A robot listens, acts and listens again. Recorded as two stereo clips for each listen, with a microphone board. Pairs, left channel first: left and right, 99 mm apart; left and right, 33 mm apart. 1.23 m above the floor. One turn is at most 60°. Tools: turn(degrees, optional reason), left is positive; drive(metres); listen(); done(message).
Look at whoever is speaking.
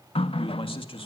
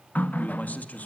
turn(degrees=60, reason="The man speaking: about 65° left or 115° left.")
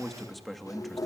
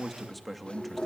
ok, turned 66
done("Found it: a man speaking, straight ahead, 2 to 4 m away.")